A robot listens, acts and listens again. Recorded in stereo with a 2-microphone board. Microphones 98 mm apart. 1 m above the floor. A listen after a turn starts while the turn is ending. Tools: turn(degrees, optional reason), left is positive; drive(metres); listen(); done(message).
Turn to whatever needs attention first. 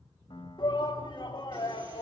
turn(degrees=55, reason="The shout: about 55° left or 125° left.")
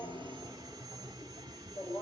turn(degrees=75, reason="So it is at 75° left.")
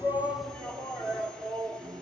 turn(degrees=15, reason="The shout is now 15° left.")
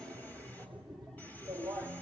done("Found it: a shout, straight ahead, 2 to 4 m away.")